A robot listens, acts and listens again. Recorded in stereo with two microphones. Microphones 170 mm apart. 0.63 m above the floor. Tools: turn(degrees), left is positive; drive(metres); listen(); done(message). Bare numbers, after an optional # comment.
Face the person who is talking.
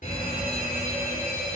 listen()
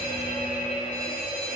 listen()
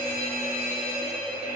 done("I can't make out anyone speaking to turn to.")